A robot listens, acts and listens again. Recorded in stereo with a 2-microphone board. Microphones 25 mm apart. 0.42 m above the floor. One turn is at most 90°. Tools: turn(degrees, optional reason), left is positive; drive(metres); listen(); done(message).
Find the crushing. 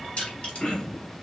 turn(degrees=55, reason="The crushing: about 55° left or 125° left.")
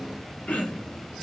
done("Found it: crushing, straight ahead, 2 to 4 m away.")